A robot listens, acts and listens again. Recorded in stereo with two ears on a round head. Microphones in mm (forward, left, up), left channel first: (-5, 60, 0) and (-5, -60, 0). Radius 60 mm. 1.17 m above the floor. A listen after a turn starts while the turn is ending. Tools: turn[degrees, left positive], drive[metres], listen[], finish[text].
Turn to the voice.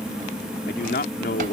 Thought: The man speaking: about 75° left or 105° left.
Action: turn[75]
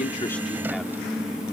Action: listen[]
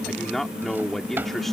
Action: finish[Found it: a man speaking, straight ahead.]